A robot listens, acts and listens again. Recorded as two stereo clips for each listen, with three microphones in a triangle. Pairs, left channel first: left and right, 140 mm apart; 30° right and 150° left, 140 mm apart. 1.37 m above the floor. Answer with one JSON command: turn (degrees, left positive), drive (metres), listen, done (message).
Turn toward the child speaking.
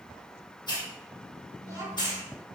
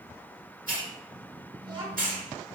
{"turn": -155}
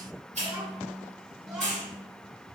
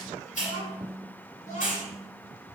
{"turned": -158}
{"done": "Found it: a child speaking, straight ahead."}